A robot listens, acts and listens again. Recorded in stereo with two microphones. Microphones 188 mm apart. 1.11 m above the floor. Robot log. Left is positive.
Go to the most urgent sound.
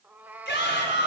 note: The shout: about 70° left or 110° left.
cmd yaw +70
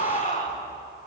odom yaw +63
note: So it is at 45° left.
cmd yaw +45
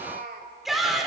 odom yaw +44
cmd fwd 1.0
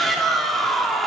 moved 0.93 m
cmd fwd 1.0
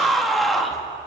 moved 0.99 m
cmd fwd 1.0
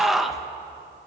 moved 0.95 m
cmd fwd 1.0
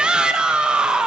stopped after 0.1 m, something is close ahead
end: I am next to the shout.